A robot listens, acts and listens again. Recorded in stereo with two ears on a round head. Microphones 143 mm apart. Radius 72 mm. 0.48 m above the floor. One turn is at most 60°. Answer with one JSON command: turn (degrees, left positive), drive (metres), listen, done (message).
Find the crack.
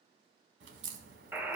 {"turn": -60}
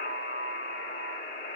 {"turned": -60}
{"turn": -30}
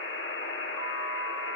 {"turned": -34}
{"done": "Facing where the crack came from. I can't hear it now."}